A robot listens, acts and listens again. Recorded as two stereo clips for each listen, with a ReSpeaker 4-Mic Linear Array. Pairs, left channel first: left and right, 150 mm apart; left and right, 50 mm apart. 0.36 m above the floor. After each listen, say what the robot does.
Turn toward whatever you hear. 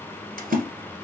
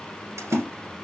Turn 75° right.
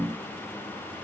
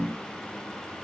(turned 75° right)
Keep listening.
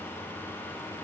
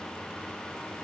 I heard a splash, but can't make it out now. It was about straight ahead or 30° right.